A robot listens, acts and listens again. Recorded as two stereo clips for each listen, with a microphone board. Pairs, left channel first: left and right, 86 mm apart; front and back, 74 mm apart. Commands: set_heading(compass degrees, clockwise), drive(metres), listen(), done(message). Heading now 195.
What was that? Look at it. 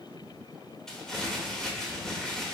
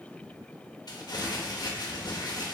done("Facing the crumpling.")